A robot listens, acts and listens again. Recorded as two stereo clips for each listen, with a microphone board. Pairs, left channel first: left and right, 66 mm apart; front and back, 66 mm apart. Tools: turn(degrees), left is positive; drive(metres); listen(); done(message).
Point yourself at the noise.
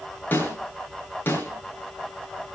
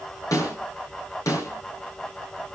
turn(degrees=30)
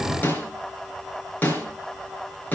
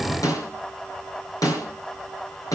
turn(degrees=30)
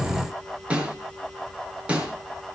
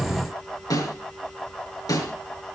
turn(degrees=-20)
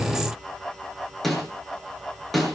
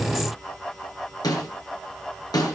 done("Facing the snare drum, over 4 m away.")